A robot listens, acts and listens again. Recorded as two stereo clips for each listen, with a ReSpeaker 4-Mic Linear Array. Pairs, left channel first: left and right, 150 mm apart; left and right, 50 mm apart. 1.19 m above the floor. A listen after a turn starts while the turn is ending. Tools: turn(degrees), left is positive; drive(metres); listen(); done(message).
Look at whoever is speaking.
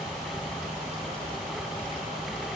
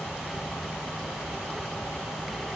listen()
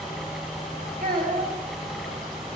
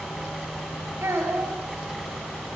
turn(degrees=-70)
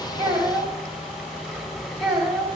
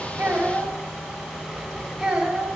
done("Found it: a child speaking, straight ahead, 2 to 4 m away.")